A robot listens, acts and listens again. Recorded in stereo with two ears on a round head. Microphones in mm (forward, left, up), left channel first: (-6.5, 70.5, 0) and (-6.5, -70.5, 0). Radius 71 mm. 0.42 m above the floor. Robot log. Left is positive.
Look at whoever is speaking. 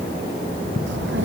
cmd yaw -90
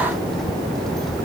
end: Found it: a child speaking, straight ahead.